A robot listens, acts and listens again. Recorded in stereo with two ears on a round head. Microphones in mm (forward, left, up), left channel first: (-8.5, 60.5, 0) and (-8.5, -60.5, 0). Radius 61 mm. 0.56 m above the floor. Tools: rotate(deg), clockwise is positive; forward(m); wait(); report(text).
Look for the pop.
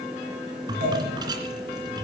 rotate(65)
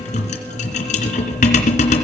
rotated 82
wait()
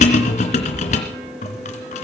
report("I heard a pop, but can't make it out now. It was about 15° left or 30° right.")